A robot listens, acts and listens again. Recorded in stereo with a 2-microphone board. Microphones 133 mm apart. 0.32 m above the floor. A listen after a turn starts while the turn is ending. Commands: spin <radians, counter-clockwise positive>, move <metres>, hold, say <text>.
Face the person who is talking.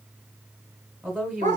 spin -0.52
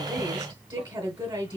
spin -2.44
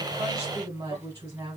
spin -0.52
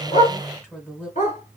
spin 0.17
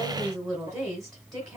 say Facing the woman speaking.